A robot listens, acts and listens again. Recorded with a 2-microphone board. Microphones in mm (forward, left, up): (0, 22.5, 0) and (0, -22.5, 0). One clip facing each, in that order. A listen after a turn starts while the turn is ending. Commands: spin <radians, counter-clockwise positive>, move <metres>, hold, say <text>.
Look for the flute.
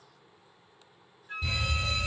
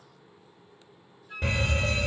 spin 0.79
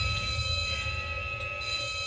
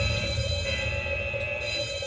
hold
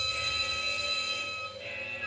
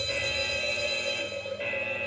hold
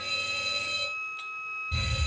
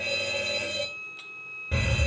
spin 1.57
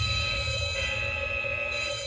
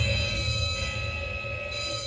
hold
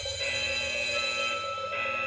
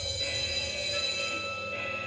spin -0.17
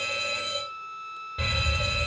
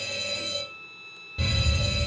say Found it: a flute, straight ahead.